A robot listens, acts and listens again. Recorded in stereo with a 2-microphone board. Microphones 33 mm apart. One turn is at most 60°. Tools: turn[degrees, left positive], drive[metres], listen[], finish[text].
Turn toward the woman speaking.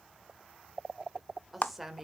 Action: turn[-30]
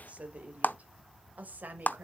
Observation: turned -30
Thought: So it is at 125° right.
Action: turn[-60]
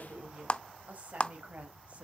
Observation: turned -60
Thought: The woman speaking is now 50° right.
Action: turn[-50]
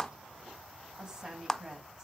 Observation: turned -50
Thought: The woman speaking is now 20° right.
Action: turn[-20]
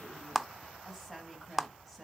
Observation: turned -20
Action: listen[]
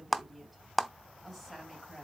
Action: listen[]
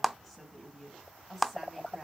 Action: finish[Facing the woman speaking, 2 to 4 m away.]